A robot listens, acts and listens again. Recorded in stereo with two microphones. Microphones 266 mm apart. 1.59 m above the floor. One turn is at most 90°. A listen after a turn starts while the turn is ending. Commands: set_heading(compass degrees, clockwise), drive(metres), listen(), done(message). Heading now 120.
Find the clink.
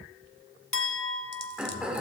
set_heading(70)
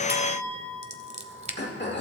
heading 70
done("Facing the clink, 1 to 2 m away.")